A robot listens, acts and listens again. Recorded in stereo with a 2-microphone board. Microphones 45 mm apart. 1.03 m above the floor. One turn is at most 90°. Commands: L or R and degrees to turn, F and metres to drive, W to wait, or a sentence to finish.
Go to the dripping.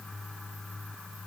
W
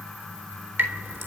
R55
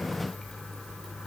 F1.0
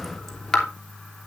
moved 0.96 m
F1.0
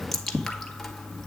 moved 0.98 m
L10
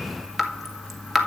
F1.0
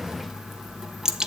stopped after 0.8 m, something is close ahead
R15
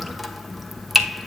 Arrived at the dripping, straight ahead.